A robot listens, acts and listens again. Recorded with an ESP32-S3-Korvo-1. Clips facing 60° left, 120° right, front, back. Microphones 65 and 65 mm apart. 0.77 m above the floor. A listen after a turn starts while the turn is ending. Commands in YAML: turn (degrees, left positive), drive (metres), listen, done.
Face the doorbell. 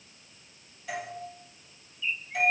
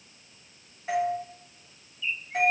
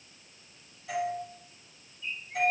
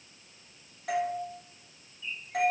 turn: -175
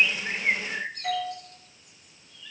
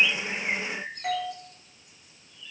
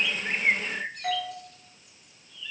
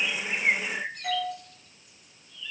turn: -60
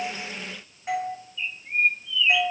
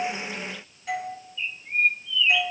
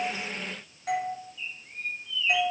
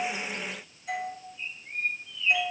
done: "Found it: a doorbell, straight ahead."